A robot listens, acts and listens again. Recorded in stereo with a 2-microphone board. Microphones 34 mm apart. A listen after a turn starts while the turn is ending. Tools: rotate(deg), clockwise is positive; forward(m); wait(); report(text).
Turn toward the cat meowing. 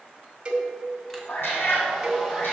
rotate(-90)
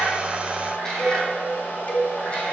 rotate(-20)
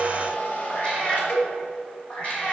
rotate(-35)
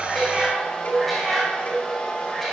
report("Facing the cat meowing.")